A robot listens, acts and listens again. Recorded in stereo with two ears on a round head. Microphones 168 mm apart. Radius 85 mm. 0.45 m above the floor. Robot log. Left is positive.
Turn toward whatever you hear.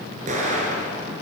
note: The explosion: about 45° right or 135° right.
cmd yaw -45
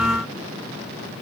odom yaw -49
cmd idle
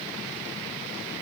end: I heard an explosion, but can't make it out now. It was about 5° left or 90° right.